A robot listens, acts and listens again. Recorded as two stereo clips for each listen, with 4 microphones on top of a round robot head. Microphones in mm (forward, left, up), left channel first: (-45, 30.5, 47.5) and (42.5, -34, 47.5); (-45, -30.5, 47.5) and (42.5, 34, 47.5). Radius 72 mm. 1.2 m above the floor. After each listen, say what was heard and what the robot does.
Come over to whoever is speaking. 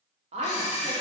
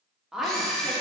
The woman speaking: 50° right. Turn 50° right.
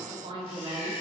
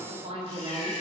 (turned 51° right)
Drive 1.0 m forward.
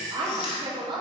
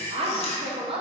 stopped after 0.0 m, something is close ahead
Blocked. The woman speaking is further on, straight ahead.